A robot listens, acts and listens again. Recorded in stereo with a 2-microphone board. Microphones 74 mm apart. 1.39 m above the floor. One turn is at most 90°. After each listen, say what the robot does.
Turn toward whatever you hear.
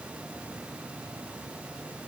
Keep listening.
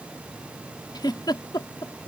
Turn 90° left.
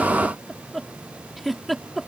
Found it: a giggle, straight ahead.